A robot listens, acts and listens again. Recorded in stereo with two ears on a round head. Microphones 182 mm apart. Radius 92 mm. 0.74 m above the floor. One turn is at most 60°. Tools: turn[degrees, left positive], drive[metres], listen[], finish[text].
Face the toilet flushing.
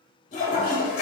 Thought: The toilet flushing: about 40° left or 140° left.
Action: turn[40]
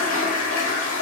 Thought: So it is at 105° left.
Action: turn[60]
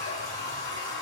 Thought: The toilet flushing is now 45° left.
Action: turn[45]
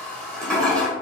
Action: finish[Found it: a toilet flushing, straight ahead.]